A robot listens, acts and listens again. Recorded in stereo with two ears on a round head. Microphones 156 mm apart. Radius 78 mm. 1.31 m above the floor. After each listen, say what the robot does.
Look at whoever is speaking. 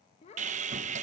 Turn 35° left.
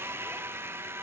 Keep listening.
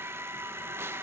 Keep listening.
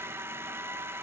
I heard a child speaking, but can't make it out now. It was about straight ahead or 110° left.